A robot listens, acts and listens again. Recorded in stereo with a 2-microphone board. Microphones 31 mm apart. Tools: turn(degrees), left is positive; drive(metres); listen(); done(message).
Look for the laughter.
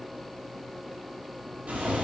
listen()
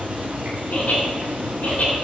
turn(degrees=55)
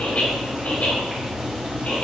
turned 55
turn(degrees=65)
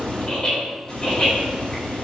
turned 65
turn(degrees=20)
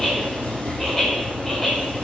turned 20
done("Found it: laughter, straight ahead, 2 to 4 m away.")